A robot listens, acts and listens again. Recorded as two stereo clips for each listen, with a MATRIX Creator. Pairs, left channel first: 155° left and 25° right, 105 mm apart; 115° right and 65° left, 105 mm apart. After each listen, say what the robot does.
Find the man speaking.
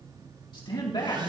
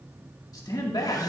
Turn 160° right.
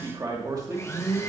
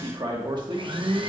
Turn 30° left.
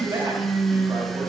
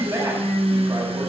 Turn 15° left.
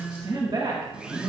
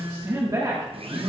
Turn 15° left.
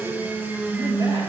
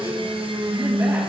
Keep listening.
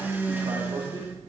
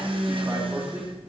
Found it: a man speaking, straight ahead.